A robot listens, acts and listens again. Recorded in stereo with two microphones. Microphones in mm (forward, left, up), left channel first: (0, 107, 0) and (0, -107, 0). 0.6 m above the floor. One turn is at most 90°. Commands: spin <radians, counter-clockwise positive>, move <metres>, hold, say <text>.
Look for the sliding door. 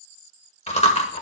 hold
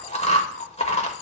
hold
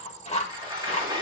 spin -0.35
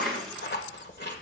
say Found it: a sliding door, straight ahead, over 4 m away.